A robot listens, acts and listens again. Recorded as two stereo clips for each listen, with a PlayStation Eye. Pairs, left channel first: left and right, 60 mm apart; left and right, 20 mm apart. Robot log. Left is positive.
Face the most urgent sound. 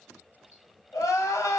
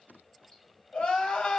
cmd yaw +90
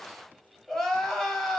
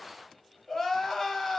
end: Found it: crying, straight ahead, 1 to 2 m away.